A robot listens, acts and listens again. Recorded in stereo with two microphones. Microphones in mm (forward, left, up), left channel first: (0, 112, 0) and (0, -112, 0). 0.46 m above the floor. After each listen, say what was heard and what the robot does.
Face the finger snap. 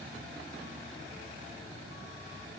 Keep listening.
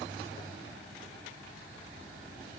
Keep listening.
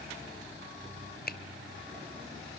The finger snap: about 45° left or 135° left. Turn 45° left.
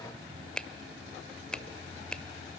Facing the finger snap, 1 to 2 m away.